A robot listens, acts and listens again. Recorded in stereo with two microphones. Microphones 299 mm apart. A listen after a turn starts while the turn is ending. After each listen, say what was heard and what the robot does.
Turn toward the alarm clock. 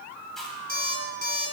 The alarm clock: about 30° left or 150° left. Turn 30° left.
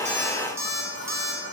So it is at 115° left. Turn 115° left.
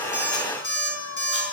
The alarm clock is now 40° left. Turn 40° left.
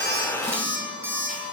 Found it: an alarm clock, straight ahead.